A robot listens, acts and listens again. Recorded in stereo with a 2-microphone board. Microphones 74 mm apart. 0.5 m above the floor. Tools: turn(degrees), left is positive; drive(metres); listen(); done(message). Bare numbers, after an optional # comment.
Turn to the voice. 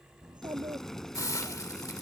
turn(-90)
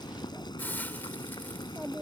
# So it is at 15° right.
turn(-15)
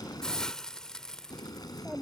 done("Found it: a child speaking, straight ahead.")